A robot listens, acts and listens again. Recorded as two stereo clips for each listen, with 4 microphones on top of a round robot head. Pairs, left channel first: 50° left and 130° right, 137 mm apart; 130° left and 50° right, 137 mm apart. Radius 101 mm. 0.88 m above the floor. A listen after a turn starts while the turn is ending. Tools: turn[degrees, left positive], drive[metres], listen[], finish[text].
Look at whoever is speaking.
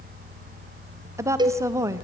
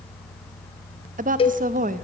Thought: The woman speaking: 60° right.
Action: turn[-60]
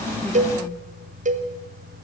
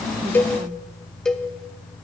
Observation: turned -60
Action: listen[]
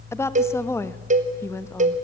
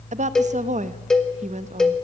Thought: The woman speaking is now 20° right.
Action: turn[-20]
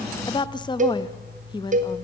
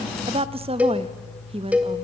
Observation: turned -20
Action: finish[Found it: a woman speaking, straight ahead, 1 to 2 m away.]